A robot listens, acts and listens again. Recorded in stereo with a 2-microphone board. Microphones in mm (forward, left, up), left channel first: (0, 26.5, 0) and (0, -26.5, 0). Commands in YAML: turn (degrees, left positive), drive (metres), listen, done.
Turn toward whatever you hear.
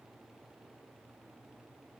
listen: true
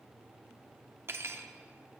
turn: -45
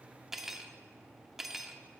done: "Facing the cutlery clinking."